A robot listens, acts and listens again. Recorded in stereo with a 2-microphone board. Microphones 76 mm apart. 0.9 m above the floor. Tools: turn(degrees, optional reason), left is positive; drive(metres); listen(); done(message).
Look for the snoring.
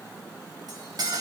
listen()
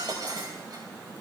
listen()
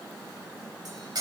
done("I can't make out snoring to turn to.")